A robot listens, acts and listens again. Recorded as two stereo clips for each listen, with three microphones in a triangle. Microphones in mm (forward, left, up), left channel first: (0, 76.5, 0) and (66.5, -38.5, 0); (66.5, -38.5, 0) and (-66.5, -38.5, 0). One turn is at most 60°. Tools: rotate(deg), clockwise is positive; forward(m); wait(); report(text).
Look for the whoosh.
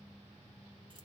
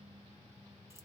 wait()
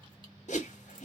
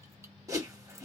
rotate(-60)
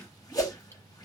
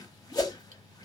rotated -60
rotate(-60)
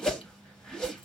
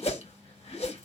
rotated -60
rotate(-35)
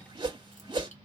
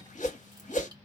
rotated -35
report("Facing the whoosh.")